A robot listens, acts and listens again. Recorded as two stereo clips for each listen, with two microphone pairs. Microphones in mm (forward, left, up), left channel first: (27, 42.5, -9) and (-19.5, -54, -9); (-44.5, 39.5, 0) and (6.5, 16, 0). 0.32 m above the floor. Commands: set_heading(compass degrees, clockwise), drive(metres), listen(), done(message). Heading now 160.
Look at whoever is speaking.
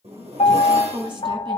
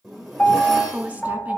set_heading(245)
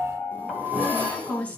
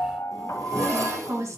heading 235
set_heading(245)
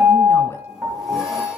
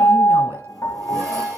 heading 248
listen()
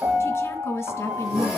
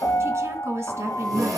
done("Found it: a woman speaking, straight ahead.")